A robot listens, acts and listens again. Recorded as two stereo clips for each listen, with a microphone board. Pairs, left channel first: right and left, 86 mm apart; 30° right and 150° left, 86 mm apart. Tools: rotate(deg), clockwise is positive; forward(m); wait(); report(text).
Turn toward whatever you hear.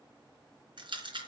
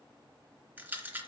rotate(-85)
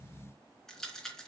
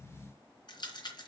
report("Found it: a rattle, straight ahead, 2 to 4 m away.")